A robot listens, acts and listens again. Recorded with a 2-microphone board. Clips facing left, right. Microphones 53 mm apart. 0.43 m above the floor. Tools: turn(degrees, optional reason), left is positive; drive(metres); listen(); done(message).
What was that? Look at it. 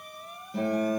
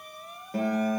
turn(degrees=-40, reason="The guitar: about 40° right or 140° right.")
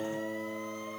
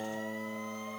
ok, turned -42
turn(degrees=-95, reason="So it is at 95° right.")
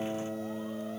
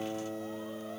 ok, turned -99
done("Found it: a guitar, straight ahead, over 4 m away.")